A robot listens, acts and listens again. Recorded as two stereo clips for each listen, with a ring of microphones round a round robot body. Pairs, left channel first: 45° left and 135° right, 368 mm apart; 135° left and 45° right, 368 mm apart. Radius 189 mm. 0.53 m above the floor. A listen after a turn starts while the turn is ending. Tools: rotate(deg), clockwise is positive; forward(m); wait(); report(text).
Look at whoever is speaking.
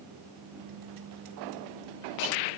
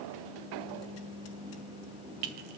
wait()
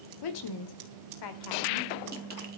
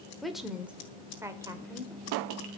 rotate(-35)
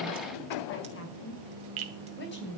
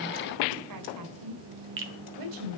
rotate(15)
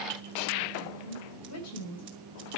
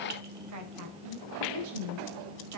report("Found it: a woman speaking, straight ahead.")